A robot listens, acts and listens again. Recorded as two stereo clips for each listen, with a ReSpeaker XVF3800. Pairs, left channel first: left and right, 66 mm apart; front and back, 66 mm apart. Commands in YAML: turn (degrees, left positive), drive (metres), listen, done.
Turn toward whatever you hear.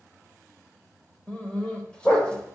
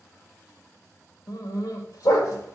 turn: 15
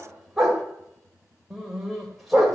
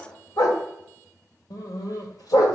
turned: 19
done: "Found it: a dog barking, straight ahead."